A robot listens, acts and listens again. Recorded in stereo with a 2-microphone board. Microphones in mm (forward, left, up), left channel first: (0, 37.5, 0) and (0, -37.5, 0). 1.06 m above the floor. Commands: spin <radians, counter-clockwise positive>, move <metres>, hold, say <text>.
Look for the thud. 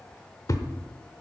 spin 0.87
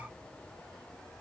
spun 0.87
hold
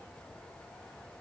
say I heard a thud, but can't make it out now. It was about straight ahead or 80° left.